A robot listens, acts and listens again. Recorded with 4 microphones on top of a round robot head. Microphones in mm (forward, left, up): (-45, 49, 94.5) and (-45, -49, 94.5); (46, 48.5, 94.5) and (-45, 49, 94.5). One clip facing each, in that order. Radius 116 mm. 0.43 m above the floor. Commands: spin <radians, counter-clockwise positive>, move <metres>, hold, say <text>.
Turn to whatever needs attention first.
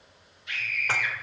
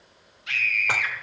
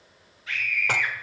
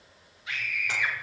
spin -1.83
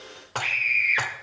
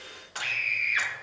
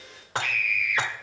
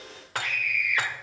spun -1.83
spin -0.44
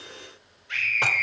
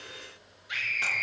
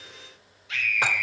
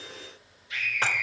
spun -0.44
spin -0.17
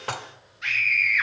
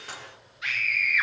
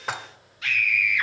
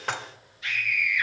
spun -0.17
say Facing the scream.